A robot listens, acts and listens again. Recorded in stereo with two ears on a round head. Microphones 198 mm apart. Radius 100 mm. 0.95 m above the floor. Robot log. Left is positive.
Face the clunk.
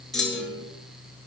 cmd yaw +30
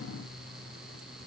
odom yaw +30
cmd idle
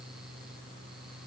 end: I heard a clunk, but can't make it out now. It was about 30° right or 150° left.